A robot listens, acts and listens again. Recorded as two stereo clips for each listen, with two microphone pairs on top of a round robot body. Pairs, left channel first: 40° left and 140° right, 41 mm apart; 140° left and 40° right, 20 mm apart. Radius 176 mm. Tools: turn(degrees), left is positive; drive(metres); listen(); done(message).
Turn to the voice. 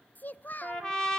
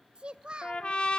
done("Found it: a child speaking, straight ahead, under 1 m away.")